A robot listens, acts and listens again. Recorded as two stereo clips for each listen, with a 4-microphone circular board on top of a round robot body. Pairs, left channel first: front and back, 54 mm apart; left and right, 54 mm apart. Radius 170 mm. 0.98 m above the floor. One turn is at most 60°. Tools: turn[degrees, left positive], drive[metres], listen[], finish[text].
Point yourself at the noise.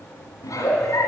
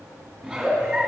Thought: The giggle: 10° right.
Action: turn[-10]
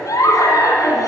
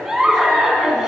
Action: finish[Facing the giggle.]